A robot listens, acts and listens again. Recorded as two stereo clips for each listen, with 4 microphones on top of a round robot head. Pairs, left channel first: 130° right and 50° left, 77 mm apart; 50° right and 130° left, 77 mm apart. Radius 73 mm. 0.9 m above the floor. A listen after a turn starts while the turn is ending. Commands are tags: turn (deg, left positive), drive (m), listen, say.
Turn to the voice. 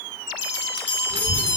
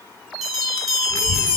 <turn deg="15"/>
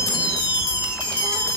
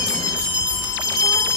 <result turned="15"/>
<say>Found it: a child speaking, straight ahead, 1 to 2 m away.</say>